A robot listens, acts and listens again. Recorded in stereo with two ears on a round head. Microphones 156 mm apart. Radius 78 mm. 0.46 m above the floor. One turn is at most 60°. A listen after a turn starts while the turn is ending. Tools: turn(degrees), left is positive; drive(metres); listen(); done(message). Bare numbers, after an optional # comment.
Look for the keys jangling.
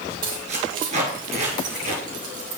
# The keys jangling: about 45° right or 135° right.
turn(-45)
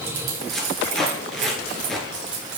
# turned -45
# So it is at 80° right.
turn(-60)
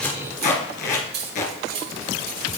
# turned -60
# The keys jangling is now 60° right.
turn(-60)
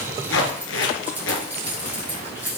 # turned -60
# The keys jangling is now 10° right.
turn(-10)
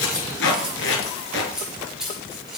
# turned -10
done("Found it: keys jangling, straight ahead, over 4 m away.")